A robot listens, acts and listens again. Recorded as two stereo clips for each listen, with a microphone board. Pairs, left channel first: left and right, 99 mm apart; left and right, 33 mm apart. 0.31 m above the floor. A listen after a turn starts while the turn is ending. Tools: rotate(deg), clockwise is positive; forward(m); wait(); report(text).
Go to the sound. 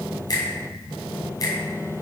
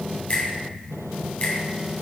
rotate(-40)
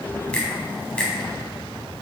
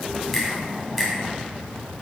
rotate(-10)
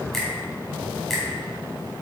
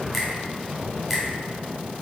forward(1.0)
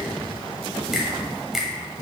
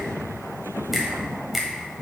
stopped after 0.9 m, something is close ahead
report("I am next to the finger snap.")